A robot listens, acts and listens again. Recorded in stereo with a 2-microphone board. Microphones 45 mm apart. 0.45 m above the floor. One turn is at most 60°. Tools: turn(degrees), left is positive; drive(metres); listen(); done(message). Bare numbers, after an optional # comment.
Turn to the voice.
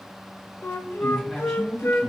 turn(30)
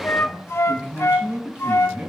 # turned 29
# So it is at 25° right.
turn(-25)
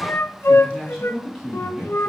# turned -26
done("Facing the man speaking.")